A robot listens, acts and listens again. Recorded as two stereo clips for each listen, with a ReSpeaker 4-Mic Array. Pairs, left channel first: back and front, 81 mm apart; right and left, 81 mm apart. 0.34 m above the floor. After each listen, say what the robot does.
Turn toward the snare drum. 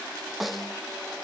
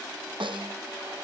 Turn 90° left.
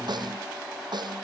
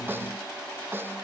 Turn 25° left.
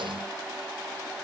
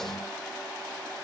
Keep listening.
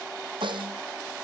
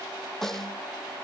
Found it: a snare drum, straight ahead.